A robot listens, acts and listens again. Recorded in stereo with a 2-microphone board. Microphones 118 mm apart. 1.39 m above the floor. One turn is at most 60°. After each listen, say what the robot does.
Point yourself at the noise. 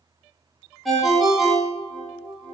Turn 30° left.
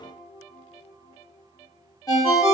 Turn 60° left.
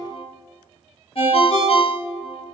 Turn 60° left.
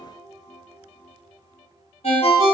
Turn 60° left.
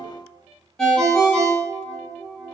Facing the ringtone, 1 to 2 m away.